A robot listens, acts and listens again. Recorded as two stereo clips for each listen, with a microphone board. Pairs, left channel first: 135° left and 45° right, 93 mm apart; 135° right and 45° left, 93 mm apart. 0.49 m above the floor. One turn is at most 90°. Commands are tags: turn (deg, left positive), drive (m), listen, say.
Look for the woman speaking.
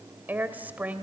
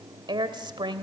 <turn deg="25"/>
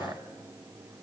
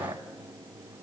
<listen/>
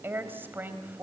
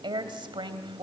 <turn deg="25"/>
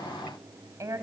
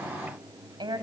<turn deg="10"/>
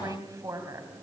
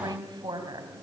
<turn deg="10"/>
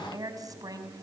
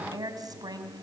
<say>Facing the woman speaking.</say>